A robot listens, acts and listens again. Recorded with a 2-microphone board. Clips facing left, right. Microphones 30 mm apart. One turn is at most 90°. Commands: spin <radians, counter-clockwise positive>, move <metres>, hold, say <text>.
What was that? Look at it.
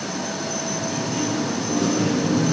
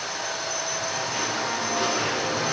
spin -0.79
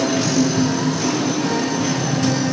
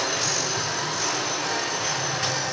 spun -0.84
say Found it: singing, straight ahead.